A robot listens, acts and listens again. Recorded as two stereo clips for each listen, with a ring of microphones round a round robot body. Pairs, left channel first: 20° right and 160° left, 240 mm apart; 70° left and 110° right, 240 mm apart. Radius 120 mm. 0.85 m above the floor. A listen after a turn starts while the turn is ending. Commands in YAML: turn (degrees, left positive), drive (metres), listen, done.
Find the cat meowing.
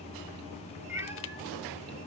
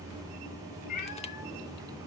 turn: 75
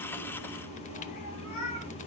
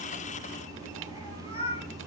done: "Found it: a cat meowing, straight ahead, over 4 m away."